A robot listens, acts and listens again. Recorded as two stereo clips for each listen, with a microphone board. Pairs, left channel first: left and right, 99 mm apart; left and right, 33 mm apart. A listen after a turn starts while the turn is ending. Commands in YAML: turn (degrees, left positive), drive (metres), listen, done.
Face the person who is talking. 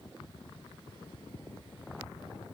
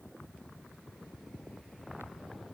listen: true
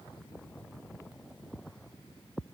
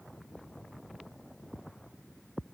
listen: true
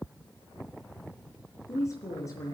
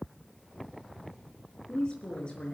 turn: 35
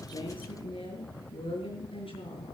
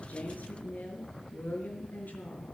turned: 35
turn: 115
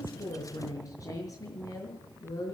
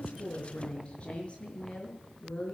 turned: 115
turn: 35
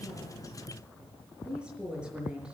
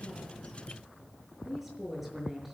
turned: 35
turn: -10
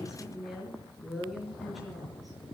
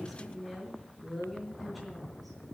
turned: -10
done: "Facing the woman speaking, over 4 m away."